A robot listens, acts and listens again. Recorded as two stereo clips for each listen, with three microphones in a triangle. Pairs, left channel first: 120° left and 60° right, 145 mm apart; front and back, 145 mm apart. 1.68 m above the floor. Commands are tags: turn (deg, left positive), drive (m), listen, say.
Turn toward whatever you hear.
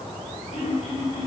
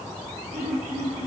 <turn deg="165"/>
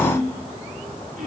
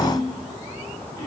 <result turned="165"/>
<turn deg="-55"/>
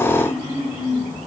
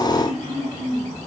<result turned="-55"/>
<turn deg="10"/>
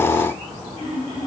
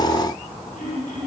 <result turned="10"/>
<say>Facing the throat clearing.</say>